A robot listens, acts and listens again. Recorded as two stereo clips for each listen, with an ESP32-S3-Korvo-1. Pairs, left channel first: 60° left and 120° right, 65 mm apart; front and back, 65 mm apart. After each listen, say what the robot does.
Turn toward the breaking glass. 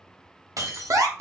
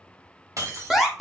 Turn 150° right.
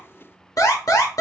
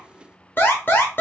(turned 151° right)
Facing where the breaking glass came from. I can't hear it now.